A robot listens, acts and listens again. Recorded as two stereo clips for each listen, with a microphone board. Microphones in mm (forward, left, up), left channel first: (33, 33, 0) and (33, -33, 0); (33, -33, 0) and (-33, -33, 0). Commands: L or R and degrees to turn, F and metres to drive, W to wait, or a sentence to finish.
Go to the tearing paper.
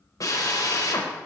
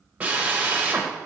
W
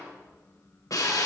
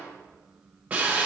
W
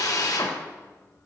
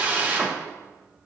I can't make out tearing paper, only a drill.